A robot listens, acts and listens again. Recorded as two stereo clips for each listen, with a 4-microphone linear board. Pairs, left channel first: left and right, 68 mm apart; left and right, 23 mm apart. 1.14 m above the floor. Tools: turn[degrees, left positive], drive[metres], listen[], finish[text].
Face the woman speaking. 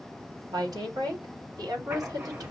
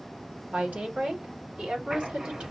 Thought: The woman speaking: about 65° right or 115° right.
Action: turn[-65]
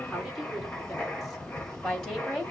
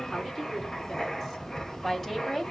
Thought: So it is at 10° left.
Action: turn[10]
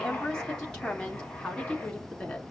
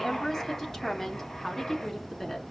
Thought: The woman speaking is now 15° left.
Action: turn[15]
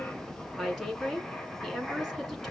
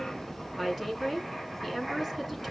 Action: finish[Found it: a woman speaking, straight ahead.]